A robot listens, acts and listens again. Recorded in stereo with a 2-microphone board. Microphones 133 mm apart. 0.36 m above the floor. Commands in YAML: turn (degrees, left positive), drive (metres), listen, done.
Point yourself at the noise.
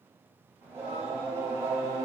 turn: -20
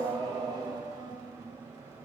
turn: -25
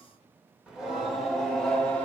turn: 10
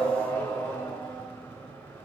turn: 15
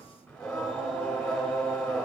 done: "Facing the singing, 1 to 2 m away."